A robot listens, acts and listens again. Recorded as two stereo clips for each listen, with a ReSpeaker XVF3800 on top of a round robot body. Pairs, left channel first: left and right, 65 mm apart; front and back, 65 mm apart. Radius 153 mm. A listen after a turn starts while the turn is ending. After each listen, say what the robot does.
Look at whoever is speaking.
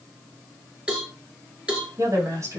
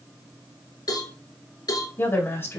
Turn 55° right.
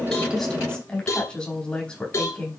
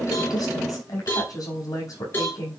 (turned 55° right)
Turn 15° left.
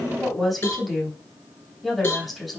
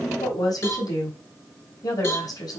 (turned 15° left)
Found it: a woman speaking, straight ahead, over 4 m away.